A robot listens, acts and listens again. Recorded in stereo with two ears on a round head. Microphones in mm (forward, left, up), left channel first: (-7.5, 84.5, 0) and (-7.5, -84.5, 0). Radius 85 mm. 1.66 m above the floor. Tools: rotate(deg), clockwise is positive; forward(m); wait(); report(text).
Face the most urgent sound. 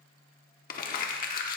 wait()
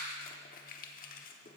wait()
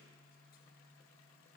report("I can't make out anything urgent, only crumpling.")